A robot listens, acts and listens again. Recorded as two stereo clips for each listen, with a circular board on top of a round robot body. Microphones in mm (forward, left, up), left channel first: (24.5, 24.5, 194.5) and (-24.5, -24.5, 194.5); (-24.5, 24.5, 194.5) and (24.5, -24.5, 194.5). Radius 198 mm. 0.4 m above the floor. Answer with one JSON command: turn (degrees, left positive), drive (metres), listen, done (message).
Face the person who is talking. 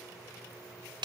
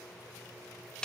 {"listen": true}
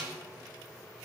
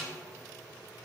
{"listen": true}
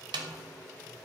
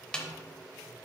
{"done": "I can't make out anyone speaking to turn to."}